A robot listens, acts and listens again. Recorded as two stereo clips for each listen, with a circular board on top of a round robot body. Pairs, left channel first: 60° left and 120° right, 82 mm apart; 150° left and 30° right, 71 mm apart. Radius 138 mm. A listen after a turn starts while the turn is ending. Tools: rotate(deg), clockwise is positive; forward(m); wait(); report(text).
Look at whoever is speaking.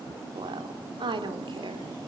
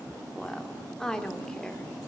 rotate(130)
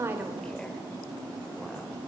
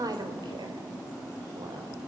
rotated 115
rotate(15)
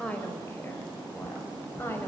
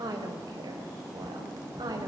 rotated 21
report("Facing the woman speaking, over 4 m away.")